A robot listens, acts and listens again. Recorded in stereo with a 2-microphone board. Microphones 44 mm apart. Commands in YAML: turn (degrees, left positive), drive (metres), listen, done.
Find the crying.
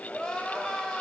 turn: 20
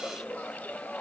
turn: 140
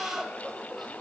done: "Facing the crying, under 1 m away."